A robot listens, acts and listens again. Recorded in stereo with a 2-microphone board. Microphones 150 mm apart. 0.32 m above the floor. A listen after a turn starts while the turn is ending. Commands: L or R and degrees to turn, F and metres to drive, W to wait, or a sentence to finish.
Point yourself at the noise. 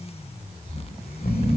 L65
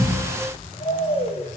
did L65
L50
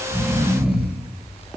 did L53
Found it: snoring, straight ahead, over 4 m away.